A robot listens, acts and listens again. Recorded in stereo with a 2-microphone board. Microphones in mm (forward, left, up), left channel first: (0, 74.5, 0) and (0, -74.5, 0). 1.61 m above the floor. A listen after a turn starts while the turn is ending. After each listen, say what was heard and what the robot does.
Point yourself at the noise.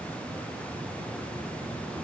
Keep listening.
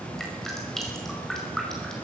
Turn 30° left.
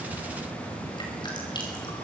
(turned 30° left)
Keep listening.
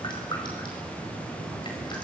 So it is at 150° left. Turn 150° left.
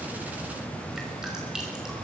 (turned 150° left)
Keep listening.
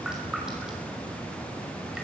Found it: dripping, straight ahead.